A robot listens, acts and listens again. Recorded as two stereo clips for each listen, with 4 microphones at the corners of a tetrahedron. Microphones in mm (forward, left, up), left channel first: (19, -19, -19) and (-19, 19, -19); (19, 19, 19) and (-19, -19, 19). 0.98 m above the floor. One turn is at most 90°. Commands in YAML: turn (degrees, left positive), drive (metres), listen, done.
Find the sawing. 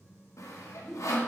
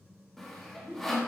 turn: -40
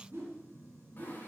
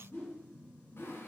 listen: true
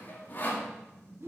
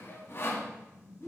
done: "Facing the sawing, 1 to 2 m away."